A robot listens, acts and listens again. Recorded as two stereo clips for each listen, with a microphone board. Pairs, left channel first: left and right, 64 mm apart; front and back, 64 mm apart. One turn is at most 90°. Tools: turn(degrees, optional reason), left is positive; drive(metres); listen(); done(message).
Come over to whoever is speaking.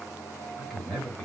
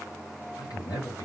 turn(degrees=10, reason="The man speaking: 10° left.")
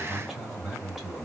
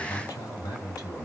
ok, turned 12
drive(metres=1.0)
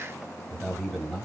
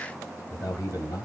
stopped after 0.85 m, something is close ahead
done("Blocked. The man speaking is further on, straight ahead.")